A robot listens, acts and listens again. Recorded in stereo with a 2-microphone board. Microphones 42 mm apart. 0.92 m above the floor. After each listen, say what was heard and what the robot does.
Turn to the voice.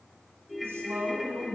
The woman speaking: about 75° right or 105° right. Turn 75° right.
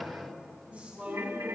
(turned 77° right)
So it is at 35° right. Turn 35° right.
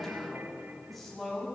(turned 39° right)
Found it: a woman speaking, straight ahead.